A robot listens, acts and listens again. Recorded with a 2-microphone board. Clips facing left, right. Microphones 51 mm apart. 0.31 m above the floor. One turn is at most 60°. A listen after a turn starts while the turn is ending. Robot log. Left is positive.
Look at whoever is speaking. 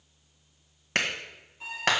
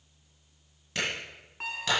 cmd idle
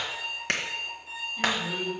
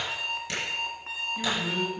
note: The man speaking: about 55° right or 125° right.
cmd yaw -55
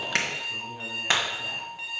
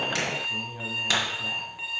end: Found it: a man speaking, straight ahead, 2 to 4 m away.